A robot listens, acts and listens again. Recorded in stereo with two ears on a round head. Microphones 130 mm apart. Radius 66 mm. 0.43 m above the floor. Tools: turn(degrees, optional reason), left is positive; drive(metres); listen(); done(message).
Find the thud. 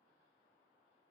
listen()
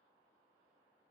listen()
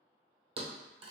turn(degrees=-45, reason="The thud: about 45° right or 135° right.")
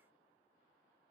listen()
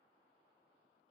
done("I heard a thud, but can't make it out now. It was about straight ahead or 90° right.")